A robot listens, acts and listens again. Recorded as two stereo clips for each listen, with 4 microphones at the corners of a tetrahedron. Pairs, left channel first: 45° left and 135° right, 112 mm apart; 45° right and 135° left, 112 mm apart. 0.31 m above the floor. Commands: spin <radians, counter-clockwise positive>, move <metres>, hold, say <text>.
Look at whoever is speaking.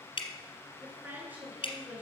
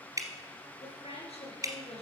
spin -1.05
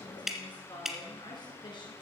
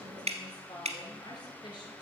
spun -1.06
say Found it: a woman speaking, straight ahead.